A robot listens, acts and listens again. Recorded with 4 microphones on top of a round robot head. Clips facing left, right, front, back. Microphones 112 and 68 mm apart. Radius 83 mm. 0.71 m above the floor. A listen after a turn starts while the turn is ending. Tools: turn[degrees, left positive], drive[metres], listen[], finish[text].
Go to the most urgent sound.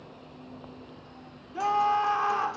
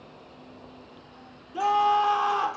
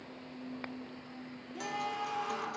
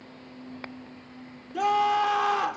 Thought: The scream: 165° right.
Action: turn[-165]
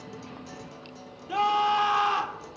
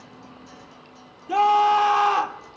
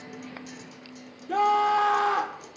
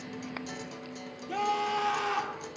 Thought: The scream is now 50° right.
Action: turn[-50]
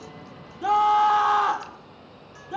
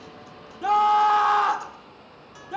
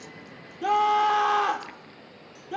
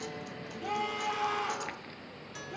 Action: drive[1.0]
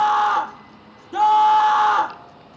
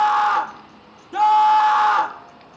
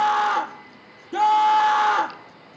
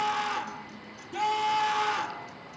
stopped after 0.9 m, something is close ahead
Action: finish[I am next to the scream.]